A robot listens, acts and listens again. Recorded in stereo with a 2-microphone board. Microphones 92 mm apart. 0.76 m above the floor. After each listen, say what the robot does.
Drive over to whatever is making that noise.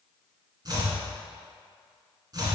Turn 45° right.
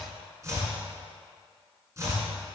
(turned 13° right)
Turn 30° right.
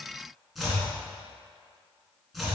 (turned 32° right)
Drive 1.0 m forward.
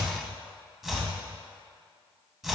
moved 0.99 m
Drive 1.0 m forward.
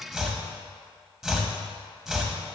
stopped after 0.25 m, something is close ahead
I am next to the chopping.